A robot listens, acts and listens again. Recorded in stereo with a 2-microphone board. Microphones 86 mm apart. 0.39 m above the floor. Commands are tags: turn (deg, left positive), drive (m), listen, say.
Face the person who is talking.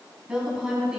<turn deg="-30"/>
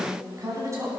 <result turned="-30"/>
<turn deg="-140"/>
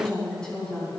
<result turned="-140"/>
<turn deg="10"/>
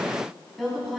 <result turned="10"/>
<say>Found it: a woman speaking, straight ahead.</say>